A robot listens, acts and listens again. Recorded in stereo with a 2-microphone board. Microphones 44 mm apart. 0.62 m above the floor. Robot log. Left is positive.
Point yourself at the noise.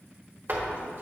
note: The door slam: about 50° right or 130° right.
cmd yaw -50
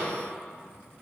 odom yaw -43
cmd idle
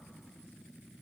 end: I heard a door slam, but can't make it out now. It was about 5° right or 90° right.